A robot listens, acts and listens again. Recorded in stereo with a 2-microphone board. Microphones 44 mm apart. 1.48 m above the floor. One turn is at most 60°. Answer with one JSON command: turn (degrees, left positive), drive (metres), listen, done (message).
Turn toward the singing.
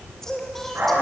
{"turn": 30}
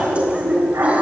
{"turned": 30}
{"listen": true}
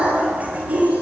{"listen": true}
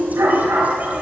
{"done": "I heard singing, but can't make it out now. It was about 25° right or 145° left."}